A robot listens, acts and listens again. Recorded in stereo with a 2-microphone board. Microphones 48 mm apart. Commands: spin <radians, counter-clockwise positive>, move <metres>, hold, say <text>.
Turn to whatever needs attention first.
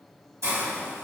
hold
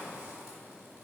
hold
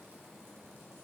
say I can't make out anything urgent to turn to.